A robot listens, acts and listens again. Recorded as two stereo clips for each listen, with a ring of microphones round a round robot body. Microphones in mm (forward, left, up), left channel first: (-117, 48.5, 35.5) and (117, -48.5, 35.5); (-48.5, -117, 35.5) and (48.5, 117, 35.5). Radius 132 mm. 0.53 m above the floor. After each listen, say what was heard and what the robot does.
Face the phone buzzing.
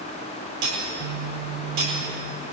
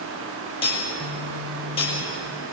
Found it: a phone buzzing, straight ahead, over 4 m away.